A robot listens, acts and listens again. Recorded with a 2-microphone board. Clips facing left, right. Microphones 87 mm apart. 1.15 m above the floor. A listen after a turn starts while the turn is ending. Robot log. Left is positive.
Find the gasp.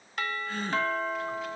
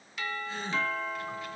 note: The gasp: about 65° left or 115° left.
cmd yaw +65
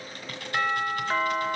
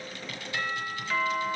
cmd idle
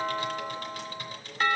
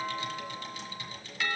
end: I heard a gasp, but can't make it out now. It was about straight ahead or 50° left.